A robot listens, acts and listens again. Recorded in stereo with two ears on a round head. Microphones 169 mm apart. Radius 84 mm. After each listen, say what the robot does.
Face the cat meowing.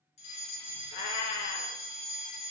Turn 45° left.
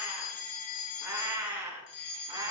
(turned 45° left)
Turn 20° right.
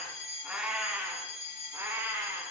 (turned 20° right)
Turn 10° right.
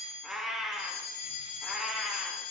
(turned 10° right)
Found it: a cat meowing, straight ahead.